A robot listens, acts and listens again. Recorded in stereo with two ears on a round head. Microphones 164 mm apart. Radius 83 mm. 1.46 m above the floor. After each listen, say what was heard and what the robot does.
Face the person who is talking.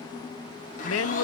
Turn 90° left.
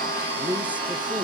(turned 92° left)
Found it: a woman speaking, straight ahead, under 1 m away.